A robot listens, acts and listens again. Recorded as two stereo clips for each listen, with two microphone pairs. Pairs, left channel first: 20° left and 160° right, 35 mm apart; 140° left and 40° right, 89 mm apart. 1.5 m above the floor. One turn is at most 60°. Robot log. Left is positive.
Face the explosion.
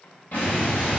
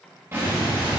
note: The explosion: 20° left.
cmd yaw +20
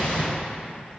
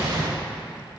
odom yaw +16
end: Found it: an explosion, straight ahead.